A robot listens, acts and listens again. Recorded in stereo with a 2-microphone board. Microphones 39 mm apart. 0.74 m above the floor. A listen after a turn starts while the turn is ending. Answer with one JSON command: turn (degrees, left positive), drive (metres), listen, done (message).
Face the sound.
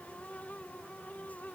{"listen": true}
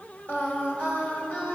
{"turn": 50}
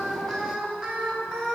{"done": "Facing the singing, 2 to 4 m away."}